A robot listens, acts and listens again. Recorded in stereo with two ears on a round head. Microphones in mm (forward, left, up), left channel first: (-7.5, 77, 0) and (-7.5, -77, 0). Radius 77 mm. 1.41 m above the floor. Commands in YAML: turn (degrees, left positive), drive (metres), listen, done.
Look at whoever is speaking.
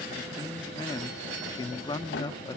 turn: 25
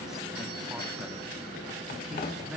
done: "Facing the man speaking, 1 to 2 m away."